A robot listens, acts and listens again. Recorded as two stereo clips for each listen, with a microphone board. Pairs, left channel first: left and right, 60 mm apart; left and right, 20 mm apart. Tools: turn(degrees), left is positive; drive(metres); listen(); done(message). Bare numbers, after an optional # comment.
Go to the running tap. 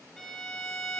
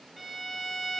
listen()
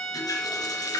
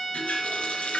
# The running tap: about 75° left or 105° left.
turn(75)
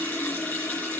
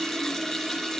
# So it is at 30° left.
turn(30)
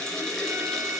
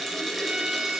# The running tap is now 10° left.
turn(10)
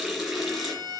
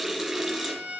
drive(1.0)
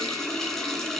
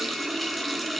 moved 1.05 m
drive(1.0)
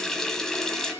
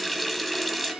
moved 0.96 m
# The running tap is now 10° left.
turn(10)
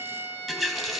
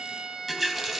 drive(1.0)
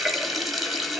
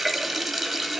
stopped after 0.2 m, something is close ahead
done("Arrived at the running tap, straight ahead.")